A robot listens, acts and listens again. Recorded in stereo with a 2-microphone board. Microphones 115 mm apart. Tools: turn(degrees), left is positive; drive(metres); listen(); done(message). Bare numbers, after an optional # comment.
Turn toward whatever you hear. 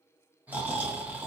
turn(-30)
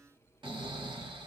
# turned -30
# So it is at 135° right.
turn(-135)
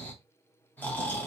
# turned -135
# The snoring is now 15° left.
turn(15)
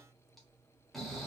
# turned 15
done("Facing the snoring.")